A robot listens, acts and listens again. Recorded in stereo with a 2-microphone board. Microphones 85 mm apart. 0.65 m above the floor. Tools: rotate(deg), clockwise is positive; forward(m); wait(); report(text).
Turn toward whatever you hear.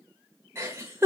rotate(35)
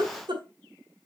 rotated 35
rotate(110)
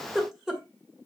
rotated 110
report("Facing the giggle, 2 to 4 m away.")